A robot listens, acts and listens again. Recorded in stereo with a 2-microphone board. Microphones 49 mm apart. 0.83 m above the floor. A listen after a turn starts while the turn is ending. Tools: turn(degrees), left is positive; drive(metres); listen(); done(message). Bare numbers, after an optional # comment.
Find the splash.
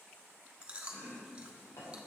listen()
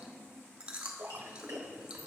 # The splash: about 55° right or 125° right.
turn(-55)
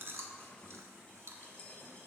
listen()
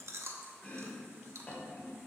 done("I heard a splash, but can't make it out now. It was about straight ahead or 70° right.")